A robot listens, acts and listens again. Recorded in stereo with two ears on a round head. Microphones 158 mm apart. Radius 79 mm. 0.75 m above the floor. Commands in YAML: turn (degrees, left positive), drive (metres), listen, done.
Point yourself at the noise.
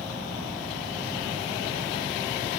listen: true
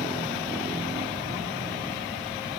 listen: true
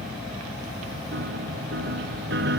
turn: -70
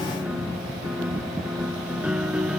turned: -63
done: "Facing the piano."